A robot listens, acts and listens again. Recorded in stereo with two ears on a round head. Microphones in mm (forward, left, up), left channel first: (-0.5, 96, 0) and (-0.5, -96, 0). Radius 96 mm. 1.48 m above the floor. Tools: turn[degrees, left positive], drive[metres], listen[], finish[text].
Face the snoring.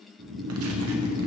Thought: The snoring: about 50° right or 130° right.
Action: turn[-50]
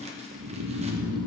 Thought: So it is at 75° right.
Action: turn[-75]
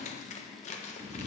Thought: The snoring is now 10° right.
Action: turn[-10]
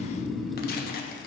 Action: finish[Facing the snoring, 1 to 2 m away.]